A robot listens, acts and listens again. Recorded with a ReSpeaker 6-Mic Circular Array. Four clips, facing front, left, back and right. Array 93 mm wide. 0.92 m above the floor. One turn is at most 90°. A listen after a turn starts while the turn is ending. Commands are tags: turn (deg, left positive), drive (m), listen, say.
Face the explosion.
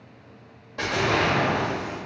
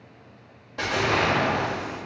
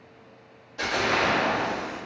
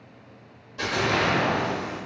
<turn deg="60"/>
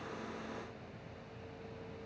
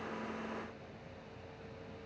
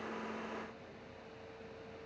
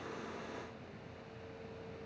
<say>I heard an explosion from this way, but can't make it out now.</say>